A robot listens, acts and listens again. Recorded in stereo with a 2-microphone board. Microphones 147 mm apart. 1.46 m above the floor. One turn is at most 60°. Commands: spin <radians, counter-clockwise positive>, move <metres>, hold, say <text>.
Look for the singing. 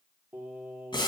spin -0.52
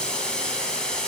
hold
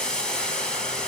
hold
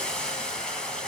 say I heard singing, but can't make it out now. It was about 15° left or 135° right.